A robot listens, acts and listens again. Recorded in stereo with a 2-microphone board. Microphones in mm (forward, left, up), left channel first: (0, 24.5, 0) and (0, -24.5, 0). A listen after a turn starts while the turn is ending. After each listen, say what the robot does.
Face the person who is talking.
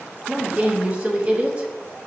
Turn 25° right.
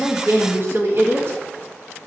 Turn 130° right.
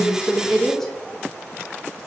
Found it: a woman speaking, straight ahead.